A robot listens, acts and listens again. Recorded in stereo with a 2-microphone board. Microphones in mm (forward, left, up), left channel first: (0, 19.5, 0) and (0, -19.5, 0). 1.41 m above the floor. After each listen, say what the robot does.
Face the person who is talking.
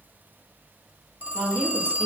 Turn 35° left.
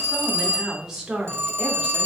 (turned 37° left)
Turn 20° right.
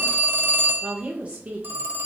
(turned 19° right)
Turn 30° right.
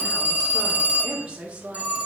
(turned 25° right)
Turn 20° right.
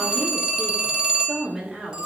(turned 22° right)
Found it: a woman speaking, straight ahead, 1 to 2 m away.